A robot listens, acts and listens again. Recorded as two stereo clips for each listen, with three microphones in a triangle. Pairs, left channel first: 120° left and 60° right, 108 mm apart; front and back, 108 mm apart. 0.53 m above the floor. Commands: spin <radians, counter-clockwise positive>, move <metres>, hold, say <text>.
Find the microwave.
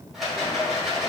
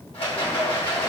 hold
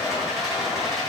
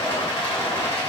hold
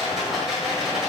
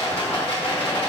say I can't make out a microwave, only a rattle.